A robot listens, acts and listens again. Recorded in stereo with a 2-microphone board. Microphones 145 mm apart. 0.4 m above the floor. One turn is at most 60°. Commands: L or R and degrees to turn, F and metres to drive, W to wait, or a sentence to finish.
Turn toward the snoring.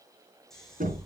L30
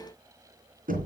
W
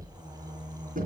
R30
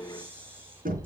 R15
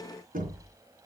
W
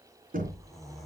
Found it: snoring, straight ahead.